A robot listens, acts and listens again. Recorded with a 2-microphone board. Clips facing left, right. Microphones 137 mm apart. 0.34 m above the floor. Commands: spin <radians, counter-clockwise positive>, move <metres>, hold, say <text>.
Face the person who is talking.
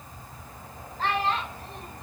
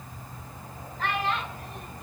spin 0.61
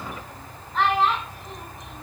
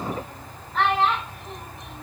say Facing the child speaking, 2 to 4 m away.